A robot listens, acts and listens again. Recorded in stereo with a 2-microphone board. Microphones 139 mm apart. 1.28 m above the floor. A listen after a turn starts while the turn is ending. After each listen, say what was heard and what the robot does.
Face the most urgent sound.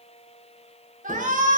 Turn 90° right.
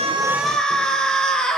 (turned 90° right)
Facing the shout, over 4 m away.